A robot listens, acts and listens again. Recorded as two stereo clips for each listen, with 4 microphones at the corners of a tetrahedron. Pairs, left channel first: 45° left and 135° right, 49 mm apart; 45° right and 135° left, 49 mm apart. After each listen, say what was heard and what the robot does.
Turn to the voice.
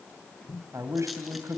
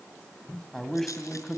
The man speaking: 130° right. Turn 130° right.
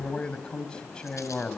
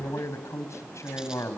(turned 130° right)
The man speaking is now 25° right. Turn 25° right.
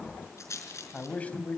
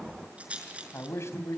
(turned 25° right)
The man speaking is now 15° right. Turn 15° right.
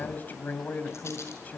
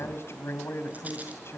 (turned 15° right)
The man speaking is now 10° right. Turn 10° right.
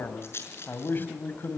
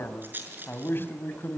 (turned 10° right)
Facing the man speaking.